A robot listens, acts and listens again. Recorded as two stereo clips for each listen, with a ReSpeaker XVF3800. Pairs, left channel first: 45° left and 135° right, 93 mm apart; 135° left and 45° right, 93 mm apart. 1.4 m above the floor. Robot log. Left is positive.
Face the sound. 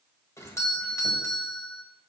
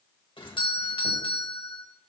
note: The doorbell: 105° left.
cmd yaw +105
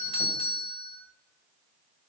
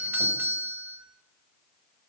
note: The doorbell is now 25° left.
cmd yaw +25
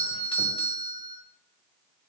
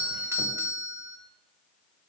note: The doorbell is now 15° left.
cmd yaw +15
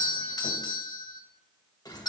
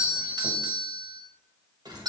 end: Facing the doorbell, 1 to 2 m away.